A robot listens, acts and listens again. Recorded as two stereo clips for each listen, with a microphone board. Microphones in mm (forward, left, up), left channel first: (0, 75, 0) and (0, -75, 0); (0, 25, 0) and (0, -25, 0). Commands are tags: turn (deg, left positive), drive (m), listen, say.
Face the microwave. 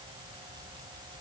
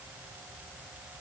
<listen/>
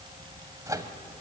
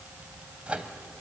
<turn deg="-20"/>
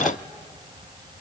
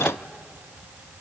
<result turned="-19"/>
<listen/>
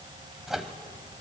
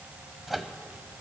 <say>Facing the microwave, 1 to 2 m away.</say>